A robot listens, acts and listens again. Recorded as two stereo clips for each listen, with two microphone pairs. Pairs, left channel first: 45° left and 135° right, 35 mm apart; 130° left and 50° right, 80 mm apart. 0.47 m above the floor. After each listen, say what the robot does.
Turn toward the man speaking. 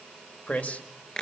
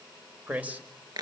Turn 15° left.
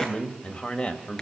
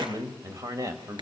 Turn 10° right.
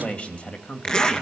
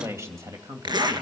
Found it: a man speaking, straight ahead, 2 to 4 m away.